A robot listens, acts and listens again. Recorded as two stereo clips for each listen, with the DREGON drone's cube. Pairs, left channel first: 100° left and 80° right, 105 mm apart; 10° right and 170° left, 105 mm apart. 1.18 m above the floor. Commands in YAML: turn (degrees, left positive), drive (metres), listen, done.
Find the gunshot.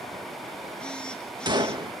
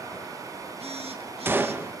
turn: -120
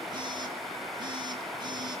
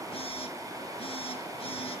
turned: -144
turn: 25
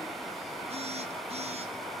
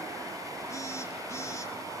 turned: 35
turn: -10
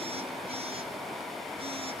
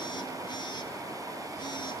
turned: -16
done: "Facing where the gunshot came from. I can't hear it now."